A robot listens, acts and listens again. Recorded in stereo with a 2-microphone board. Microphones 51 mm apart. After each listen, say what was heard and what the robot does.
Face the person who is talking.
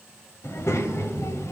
The child speaking: about 60° left or 120° left. Turn 60° left.
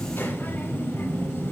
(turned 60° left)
So it is at 45° left. Turn 45° left.
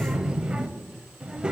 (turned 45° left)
The child speaking is now 20° right. Turn 20° right.
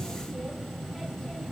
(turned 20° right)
Facing the child speaking, under 1 m away.